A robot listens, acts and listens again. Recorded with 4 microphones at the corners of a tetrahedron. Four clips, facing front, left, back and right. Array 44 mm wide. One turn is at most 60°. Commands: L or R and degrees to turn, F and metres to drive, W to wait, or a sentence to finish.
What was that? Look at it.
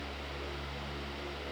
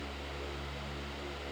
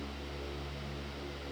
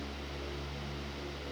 W
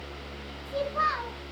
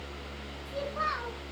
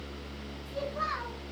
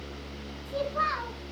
R30
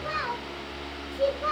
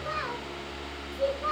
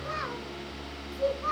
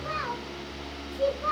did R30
Facing the child speaking, 2 to 4 m away.